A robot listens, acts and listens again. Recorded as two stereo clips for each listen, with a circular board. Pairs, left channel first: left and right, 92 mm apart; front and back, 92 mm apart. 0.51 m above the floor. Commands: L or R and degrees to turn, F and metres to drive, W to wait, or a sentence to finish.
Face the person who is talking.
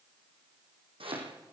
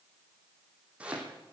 W
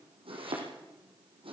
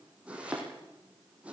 W
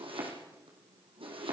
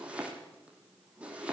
I can't make out anyone speaking to turn to.